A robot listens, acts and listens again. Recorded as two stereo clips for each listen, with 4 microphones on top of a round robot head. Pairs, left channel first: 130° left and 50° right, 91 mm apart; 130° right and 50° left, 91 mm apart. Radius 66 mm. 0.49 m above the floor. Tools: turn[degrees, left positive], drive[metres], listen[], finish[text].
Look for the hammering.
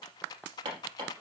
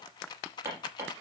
Thought: The hammering: 10° right.
Action: turn[-10]
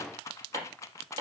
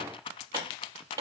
Action: finish[Facing the hammering, over 4 m away.]